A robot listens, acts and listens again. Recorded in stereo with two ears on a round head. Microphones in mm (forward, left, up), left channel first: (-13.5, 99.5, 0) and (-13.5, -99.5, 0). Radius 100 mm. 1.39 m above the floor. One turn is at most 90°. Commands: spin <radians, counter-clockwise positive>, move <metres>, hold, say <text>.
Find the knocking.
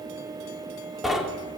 spin 0.52
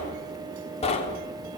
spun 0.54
spin 1.57
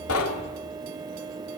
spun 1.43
spin 1.22
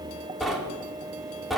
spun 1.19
say Facing the knocking, 2 to 4 m away.